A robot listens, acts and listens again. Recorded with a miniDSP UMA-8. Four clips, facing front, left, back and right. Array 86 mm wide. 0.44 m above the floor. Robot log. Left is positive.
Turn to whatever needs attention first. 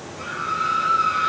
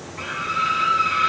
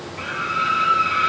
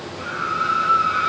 note: The scream: 160° left.
cmd yaw +160
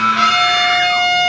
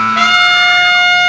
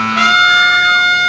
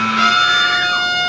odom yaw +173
note: The scream is now 10° right.
cmd yaw -10
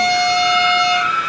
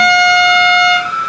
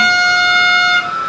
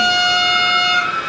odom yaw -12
end: Facing the scream.